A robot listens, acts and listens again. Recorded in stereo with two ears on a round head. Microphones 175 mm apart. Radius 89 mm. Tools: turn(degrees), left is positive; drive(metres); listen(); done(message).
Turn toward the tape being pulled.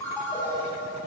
listen()
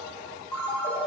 listen()
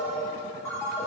done("I can't make out tape being pulled to turn to.")